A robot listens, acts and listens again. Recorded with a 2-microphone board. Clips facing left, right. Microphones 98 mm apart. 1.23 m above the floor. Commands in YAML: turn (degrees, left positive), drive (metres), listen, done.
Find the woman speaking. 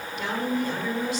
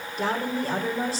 turn: -35
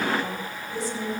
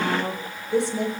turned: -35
turn: -110
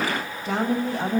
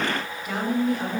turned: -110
turn: 30
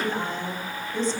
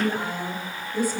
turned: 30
turn: -10
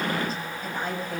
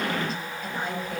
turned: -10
done: "Found it: a woman speaking, straight ahead, over 4 m away."